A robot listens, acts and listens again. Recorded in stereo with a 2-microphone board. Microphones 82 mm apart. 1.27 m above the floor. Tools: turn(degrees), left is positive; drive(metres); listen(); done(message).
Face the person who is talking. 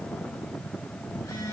listen()
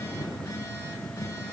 listen()
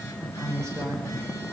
turn(degrees=-40)
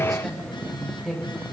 done("Facing the woman speaking.")